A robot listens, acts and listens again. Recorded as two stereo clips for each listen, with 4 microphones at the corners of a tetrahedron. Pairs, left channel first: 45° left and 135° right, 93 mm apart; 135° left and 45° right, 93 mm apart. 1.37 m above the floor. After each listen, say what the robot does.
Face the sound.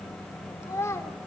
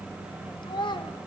Turn 100° left.
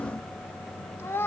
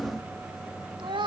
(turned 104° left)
Turn 20° right.
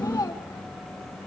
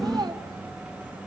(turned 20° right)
Found it: a child speaking, straight ahead.